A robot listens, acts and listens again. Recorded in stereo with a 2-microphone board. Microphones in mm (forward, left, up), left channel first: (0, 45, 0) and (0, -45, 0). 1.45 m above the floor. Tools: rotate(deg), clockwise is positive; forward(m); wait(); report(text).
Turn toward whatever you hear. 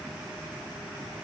wait()
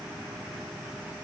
wait()
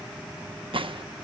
rotate(70)
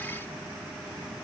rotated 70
wait()
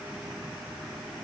report("I heard a gunshot, but can't make it out now. It was about straight ahead or 40° right.")